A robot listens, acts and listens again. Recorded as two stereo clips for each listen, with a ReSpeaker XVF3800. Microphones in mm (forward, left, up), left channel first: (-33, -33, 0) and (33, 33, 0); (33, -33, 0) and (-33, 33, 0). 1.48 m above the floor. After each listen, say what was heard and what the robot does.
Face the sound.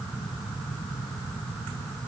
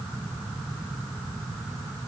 Keep listening.
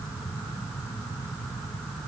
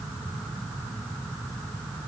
Keep listening.
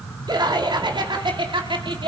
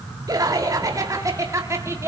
The laughter: 75° left. Turn 75° left.
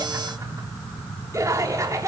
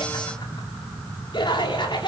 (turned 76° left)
The laughter is now 10° right. Turn 10° right.
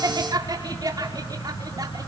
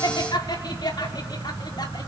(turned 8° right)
Found it: laughter, straight ahead, over 4 m away.